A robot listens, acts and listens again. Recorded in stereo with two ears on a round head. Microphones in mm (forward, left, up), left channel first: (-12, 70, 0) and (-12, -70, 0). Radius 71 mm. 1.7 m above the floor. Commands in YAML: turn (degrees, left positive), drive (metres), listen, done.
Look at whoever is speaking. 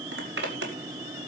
listen: true
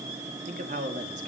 turn: -55
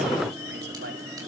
listen: true
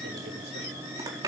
listen: true
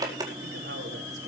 done: "I heard a man speaking, but can't make it out now. It was about straight ahead or 70° right."